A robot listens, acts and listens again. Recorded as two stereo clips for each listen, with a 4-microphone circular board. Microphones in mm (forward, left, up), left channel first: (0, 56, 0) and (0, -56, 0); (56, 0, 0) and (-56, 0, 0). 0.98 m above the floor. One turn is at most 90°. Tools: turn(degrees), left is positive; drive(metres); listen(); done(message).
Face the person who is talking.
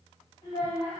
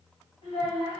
turn(degrees=45)
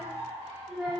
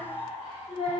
done("Found it: a child speaking, straight ahead.")